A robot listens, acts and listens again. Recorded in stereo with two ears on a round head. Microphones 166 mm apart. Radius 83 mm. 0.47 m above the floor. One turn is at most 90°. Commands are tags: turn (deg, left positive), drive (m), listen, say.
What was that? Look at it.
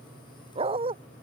<turn deg="-30"/>
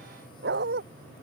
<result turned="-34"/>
<turn deg="-90"/>
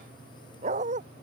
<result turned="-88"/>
<turn deg="-40"/>
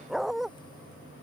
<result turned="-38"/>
<say>Found it: a dog barking, straight ahead.</say>